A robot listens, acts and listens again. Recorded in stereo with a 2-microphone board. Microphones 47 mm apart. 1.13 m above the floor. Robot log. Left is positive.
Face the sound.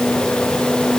cmd idle
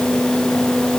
cmd idle
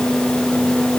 end: I can't make out anything.